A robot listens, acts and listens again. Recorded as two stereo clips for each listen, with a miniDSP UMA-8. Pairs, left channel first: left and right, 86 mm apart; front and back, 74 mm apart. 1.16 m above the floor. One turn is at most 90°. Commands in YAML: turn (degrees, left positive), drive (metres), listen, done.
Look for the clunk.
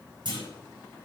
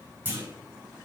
turn: -90
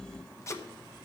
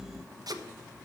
turn: -30
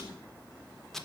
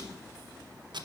done: "Facing where the clunk came from. I can't hear it now."